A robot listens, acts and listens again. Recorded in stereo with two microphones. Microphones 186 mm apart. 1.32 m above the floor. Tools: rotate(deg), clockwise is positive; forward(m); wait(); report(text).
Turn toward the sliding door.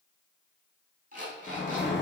rotate(-65)
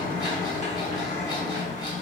rotate(-40)
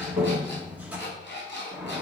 rotate(10)
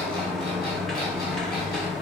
report("Facing the sliding door.")